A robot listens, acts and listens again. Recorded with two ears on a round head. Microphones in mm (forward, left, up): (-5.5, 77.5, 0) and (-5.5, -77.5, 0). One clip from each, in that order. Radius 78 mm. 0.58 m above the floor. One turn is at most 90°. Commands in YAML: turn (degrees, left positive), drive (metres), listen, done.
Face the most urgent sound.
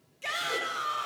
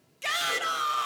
turn: -35
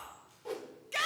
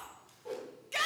done: "Found it: a shout, straight ahead."